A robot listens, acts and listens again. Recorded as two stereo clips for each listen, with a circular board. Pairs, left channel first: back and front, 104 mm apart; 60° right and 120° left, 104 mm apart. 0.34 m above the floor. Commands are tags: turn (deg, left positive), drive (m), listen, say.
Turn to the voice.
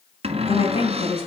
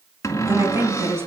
<turn deg="-175"/>
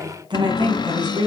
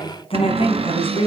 <turn deg="-40"/>
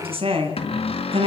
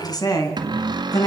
<turn deg="-15"/>
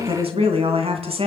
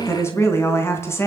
<say>Facing the woman speaking, 2 to 4 m away.</say>